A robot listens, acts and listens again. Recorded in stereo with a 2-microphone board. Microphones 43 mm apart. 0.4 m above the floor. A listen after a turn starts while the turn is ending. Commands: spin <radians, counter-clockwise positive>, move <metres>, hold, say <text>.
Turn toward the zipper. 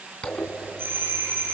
spin 0.44
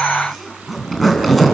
say Facing the zipper.